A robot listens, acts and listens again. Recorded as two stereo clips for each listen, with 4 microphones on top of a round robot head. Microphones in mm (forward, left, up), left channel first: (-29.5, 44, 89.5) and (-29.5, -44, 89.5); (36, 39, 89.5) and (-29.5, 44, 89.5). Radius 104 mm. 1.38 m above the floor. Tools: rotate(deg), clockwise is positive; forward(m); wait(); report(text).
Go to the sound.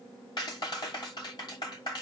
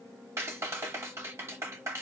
rotate(-130)
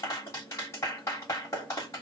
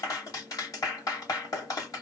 rotate(-30)
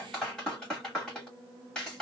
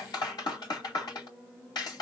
forward(1.0)
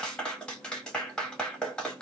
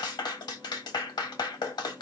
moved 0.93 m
rotate(-10)
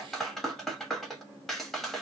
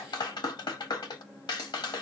forward(1.0)
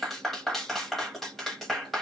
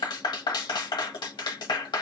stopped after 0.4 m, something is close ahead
report("Arrived at the clap, straight ahead.")